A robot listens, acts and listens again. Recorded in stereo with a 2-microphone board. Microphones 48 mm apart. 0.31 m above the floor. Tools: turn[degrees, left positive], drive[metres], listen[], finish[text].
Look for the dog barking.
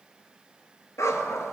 Action: turn[90]
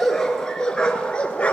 Thought: So it is at 25° left.
Action: turn[25]
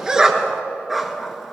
Action: finish[Found it: a dog barking, straight ahead, 1 to 2 m away.]